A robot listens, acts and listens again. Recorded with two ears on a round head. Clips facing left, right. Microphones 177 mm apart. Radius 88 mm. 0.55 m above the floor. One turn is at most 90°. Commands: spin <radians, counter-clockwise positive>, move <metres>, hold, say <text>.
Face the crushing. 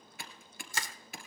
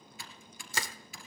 spin -1.05
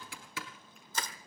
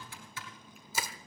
spin -0.17
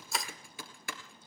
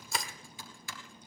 say Facing the crushing, 1 to 2 m away.